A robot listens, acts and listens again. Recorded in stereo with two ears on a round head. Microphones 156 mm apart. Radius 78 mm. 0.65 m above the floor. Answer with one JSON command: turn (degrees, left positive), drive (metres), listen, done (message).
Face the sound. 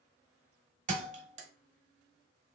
{"turn": -40}
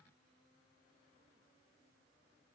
{"listen": true}
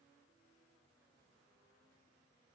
{"done": "I heard a thud, but can't make it out now. It was about straight ahead or 100° right."}